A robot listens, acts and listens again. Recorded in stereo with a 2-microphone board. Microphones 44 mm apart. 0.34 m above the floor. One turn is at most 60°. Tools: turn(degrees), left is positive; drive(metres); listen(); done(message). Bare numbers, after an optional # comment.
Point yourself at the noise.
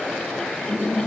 # The laughter: about 65° right or 115° right.
turn(-60)
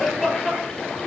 # So it is at 10° right.
turn(-10)
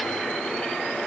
listen()
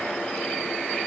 listen()
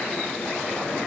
done("I heard laughter from this way, but can't make it out now.")